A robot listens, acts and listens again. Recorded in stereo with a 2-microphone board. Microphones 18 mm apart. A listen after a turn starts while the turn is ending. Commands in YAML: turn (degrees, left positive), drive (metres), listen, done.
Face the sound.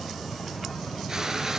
turn: -30
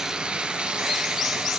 turn: -120
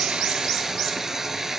turn: -30
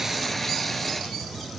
done: "Facing the frying."